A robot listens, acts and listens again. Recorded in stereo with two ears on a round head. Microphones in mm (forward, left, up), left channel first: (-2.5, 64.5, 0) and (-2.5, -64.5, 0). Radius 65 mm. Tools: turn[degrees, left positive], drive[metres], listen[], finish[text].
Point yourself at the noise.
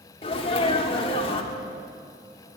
Thought: The sneeze: about 40° left or 140° left.
Action: turn[40]
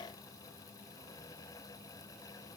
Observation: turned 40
Action: listen[]
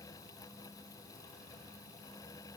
Action: finish[I heard a sneeze, but can't make it out now. It was about straight ahead or 100° left.]